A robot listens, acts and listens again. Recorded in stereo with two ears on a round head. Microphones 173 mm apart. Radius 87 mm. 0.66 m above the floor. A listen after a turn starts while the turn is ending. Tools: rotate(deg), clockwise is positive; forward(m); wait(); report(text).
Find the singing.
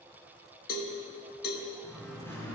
rotate(-30)
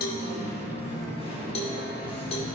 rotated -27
rotate(-155)
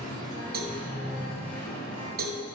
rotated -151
rotate(-10)
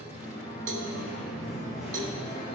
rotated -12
report("Found it: singing, straight ahead, over 4 m away.")